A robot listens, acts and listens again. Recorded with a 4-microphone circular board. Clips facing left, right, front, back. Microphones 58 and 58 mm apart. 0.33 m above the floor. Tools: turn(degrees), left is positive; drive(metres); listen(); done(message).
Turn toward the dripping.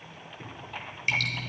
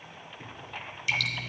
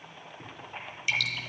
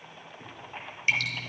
turn(degrees=125)
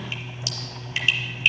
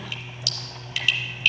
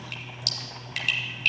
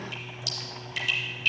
turn(degrees=25)
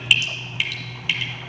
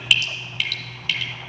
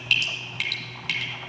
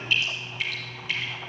turn(degrees=15)
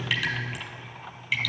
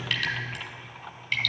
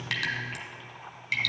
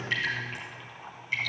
done("Facing the dripping, 1 to 2 m away.")